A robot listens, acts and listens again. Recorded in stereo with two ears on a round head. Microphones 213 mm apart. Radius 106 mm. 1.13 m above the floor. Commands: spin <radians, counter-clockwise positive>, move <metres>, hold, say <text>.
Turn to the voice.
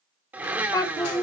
spin 0.52
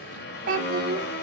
spin -0.79
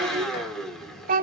spin -0.70
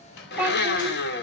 spin -0.17
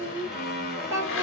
spin -0.26
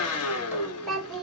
say Facing the child speaking.